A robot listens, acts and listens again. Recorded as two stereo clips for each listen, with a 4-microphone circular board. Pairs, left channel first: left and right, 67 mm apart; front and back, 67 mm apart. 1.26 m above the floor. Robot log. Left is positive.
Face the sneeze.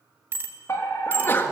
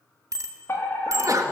note: The sneeze: 145° left.
cmd yaw +145
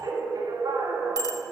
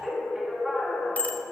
end: Facing where the sneeze came from. I can't hear it now.